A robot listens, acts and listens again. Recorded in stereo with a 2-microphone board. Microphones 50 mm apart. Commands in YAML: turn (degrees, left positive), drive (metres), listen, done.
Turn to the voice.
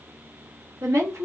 turn: -75
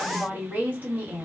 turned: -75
turn: -35
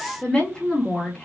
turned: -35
turn: 15
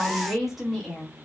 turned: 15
done: "Facing the woman speaking."